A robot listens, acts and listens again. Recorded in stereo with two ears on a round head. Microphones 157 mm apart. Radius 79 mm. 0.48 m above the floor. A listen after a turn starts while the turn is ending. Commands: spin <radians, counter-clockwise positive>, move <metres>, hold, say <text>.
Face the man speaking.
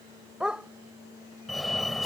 hold
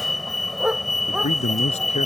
spin 0.61
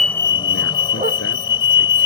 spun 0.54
hold
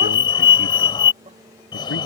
hold
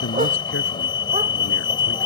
spin 1.92
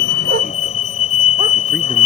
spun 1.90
hold
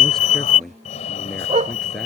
say Facing the man speaking.